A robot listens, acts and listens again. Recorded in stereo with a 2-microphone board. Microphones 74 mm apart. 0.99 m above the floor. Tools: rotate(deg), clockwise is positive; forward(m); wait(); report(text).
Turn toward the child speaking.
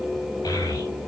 rotate(-55)
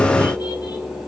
wait()
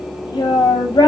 rotate(-70)
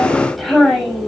report("Facing the child speaking.")